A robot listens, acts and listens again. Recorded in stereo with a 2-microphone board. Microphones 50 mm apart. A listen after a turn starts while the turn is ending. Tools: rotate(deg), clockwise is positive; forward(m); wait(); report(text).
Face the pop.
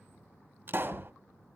rotate(45)
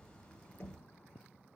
wait()
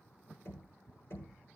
report("I heard a pop, but can't make it out now. It was about straight ahead or 90° right.")